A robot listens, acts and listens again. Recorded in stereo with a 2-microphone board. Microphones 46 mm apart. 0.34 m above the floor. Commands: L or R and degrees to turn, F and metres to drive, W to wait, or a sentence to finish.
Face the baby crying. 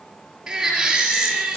R30
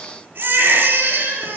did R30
R135
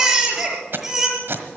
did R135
R15
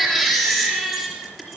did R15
Facing the baby crying, over 4 m away.